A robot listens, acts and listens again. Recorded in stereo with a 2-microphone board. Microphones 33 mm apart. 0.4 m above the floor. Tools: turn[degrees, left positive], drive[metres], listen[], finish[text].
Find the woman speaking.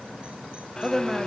Action: turn[-30]
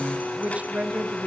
Thought: So it is at 135° right.
Action: turn[-135]
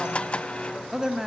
Thought: The woman speaking is now 10° right.
Action: turn[-10]
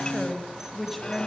Action: finish[Facing the woman speaking, 2 to 4 m away.]